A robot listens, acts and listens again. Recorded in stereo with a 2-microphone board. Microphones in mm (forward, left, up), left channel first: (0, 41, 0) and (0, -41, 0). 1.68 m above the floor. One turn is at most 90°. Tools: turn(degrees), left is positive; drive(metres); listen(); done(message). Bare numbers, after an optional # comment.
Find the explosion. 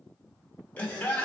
listen()
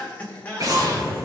# The explosion: about 50° right or 130° right.
turn(-50)
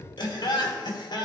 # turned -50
listen()
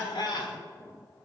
done("I heard an explosion, but can't make it out now. It was about straight ahead or 80° right.")